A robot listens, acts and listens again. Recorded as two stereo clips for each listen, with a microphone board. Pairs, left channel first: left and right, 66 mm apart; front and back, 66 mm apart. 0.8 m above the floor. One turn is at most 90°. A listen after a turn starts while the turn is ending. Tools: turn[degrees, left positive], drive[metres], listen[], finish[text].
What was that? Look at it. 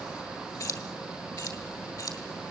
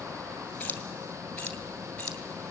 Thought: The keys jangling: 70° left.
Action: turn[70]
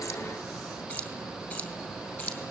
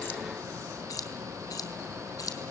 Thought: The keys jangling is now 30° left.
Action: turn[30]
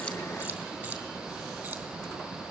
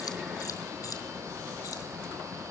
Thought: The keys jangling is now 20° right.
Action: turn[-20]
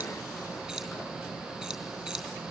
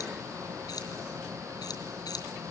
Action: finish[Facing the keys jangling, over 4 m away.]